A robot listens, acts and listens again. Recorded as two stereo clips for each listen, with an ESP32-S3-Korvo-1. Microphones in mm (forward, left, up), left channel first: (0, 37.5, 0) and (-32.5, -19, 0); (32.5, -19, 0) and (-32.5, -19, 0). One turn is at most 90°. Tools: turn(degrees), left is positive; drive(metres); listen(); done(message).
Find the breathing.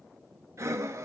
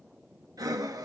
turn(degrees=-90)
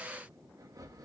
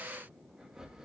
turn(degrees=-90)
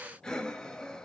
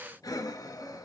turn(degrees=-15)
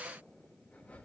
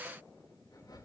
done("Facing the breathing, under 1 m away.")